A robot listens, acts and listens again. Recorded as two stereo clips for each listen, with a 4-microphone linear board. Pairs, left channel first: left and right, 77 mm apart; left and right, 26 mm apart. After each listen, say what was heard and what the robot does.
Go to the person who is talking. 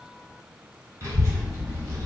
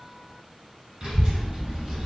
The child speaking: about 35° right or 145° right. Turn 35° right.
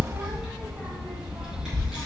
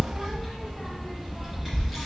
Drive 1.0 m forward.
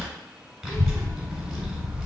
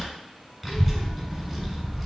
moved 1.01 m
Drive 1.0 m forward.
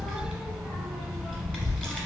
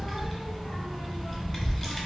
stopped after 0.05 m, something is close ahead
The child speaking is now 10° left. Turn 10° left.
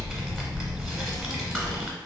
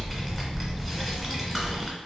I am next to the child speaking.